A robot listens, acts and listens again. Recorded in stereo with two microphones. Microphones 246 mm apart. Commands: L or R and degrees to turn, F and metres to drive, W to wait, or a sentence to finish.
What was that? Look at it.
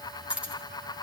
R30
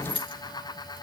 L20
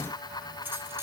W
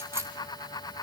W
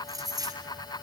R15
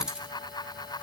Found it: keys jangling, straight ahead.